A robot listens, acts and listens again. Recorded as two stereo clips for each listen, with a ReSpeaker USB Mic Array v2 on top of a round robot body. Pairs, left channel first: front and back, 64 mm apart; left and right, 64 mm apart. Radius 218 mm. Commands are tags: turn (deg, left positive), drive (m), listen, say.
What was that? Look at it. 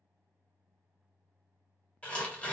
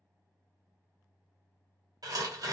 <turn deg="-70"/>
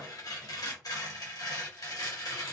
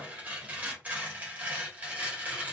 <turn deg="-25"/>
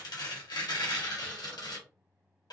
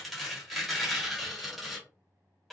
<say>Found it: tearing paper, straight ahead.</say>